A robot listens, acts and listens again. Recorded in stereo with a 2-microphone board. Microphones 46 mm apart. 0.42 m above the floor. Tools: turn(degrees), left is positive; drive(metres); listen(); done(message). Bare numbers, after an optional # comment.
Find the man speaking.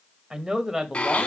turn(-30)
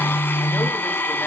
listen()
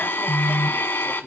listen()
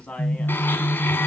# So it is at 25° left.
turn(25)
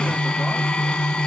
listen()
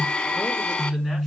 listen()
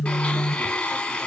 done("Facing where the man speaking came from. I can't hear it now.")